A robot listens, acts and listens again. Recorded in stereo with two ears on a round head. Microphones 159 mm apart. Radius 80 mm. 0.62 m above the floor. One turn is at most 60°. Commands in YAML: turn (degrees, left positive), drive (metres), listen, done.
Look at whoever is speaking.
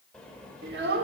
turn: -60
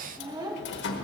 turn: -25
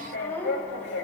turn: 10
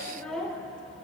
done: "Facing the child speaking, 1 to 2 m away."